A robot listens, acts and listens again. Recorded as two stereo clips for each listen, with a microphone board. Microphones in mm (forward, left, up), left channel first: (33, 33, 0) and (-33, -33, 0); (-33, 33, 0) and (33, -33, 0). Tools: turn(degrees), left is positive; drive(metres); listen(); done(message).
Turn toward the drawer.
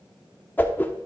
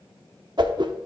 listen()
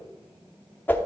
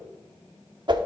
listen()
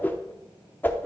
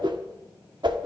done("I can't make out a drawer, only a whoosh.")